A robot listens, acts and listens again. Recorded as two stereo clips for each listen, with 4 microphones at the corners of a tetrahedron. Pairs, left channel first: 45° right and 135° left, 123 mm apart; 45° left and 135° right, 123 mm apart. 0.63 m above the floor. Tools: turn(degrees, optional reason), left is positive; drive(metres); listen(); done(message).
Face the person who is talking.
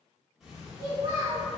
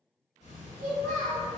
turn(degrees=-165, reason="The child speaking: 165° right.")
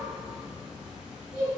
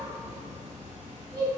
done("Facing the child speaking, 1 to 2 m away.")